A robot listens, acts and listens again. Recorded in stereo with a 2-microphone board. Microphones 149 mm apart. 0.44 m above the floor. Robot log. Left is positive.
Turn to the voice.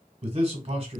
note: The man speaking: about 45° right or 135° right.
cmd yaw -45
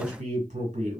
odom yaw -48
note: So it is at 75° right.
cmd yaw -75
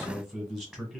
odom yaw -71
end: Facing the man speaking.